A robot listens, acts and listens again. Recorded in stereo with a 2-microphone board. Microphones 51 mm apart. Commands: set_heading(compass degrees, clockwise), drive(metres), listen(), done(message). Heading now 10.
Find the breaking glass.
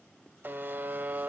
listen()
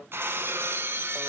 set_heading(60)
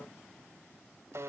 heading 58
listen()
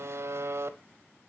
done("I heard breaking glass, but can't make it out now. It was about straight ahead or 80° right.")